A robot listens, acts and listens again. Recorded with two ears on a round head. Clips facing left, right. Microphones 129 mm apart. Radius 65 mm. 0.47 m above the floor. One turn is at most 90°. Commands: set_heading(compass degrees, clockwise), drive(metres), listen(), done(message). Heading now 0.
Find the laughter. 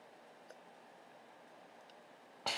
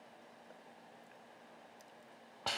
listen()
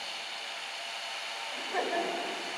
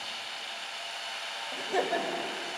set_heading(30)
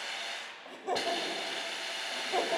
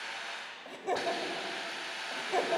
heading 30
done("Found it: laughter, straight ahead.")